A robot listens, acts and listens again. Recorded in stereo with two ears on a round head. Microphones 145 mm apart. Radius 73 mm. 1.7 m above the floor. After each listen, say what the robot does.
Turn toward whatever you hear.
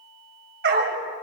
Turn 65° right.
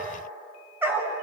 Turn 15° right.
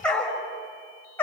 Turn 15° left.
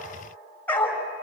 Turn 10° left.
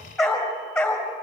Found it: a dog barking, straight ahead.